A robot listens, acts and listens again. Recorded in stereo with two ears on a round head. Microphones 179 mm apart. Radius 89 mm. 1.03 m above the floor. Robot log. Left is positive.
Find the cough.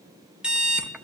cmd idle
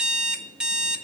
cmd idle
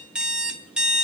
end: I can't make out a cough to turn to.